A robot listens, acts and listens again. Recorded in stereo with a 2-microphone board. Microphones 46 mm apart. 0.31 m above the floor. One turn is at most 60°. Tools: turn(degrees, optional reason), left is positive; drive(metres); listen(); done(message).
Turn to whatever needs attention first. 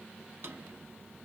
listen()
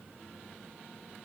listen()
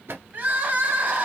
turn(degrees=-40, reason="The crying: about 40° right or 140° right.")
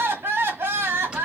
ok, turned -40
turn(degrees=-60, reason="So it is at 90° right.")
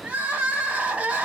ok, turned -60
turn(degrees=-30, reason="The crying is now 30° right.")
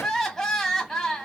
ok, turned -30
turn(degrees=10, reason="The crying is now 10° left.")
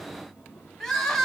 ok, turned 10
done("Found it: crying, straight ahead, 1 to 2 m away.")